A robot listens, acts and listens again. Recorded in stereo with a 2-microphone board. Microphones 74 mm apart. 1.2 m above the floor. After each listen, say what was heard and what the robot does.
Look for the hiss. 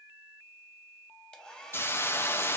The hiss: about 30° left or 150° left. Turn 30° left.
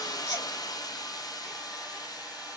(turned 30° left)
So it is at 115° left. Turn 115° left.
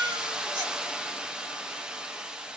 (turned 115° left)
The hiss is now 10° right. Turn 10° right.
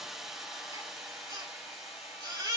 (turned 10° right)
Facing the hiss.